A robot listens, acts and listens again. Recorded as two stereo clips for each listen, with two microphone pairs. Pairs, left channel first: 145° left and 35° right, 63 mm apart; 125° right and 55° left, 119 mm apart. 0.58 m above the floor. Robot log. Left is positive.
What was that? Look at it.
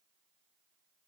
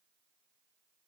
cmd idle
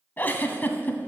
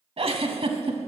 note: The giggle: 85° left.
cmd yaw +85
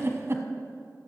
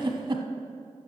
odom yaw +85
note: The giggle is now 10° left.
cmd yaw +10
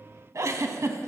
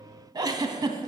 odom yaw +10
end: Found it: a giggle, straight ahead, 1 to 2 m away.